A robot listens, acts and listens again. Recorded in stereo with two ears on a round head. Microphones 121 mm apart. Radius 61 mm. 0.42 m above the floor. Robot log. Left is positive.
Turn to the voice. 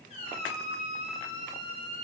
cmd idle
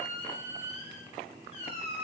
cmd idle
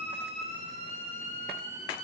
end: I can't make out anyone speaking to turn to.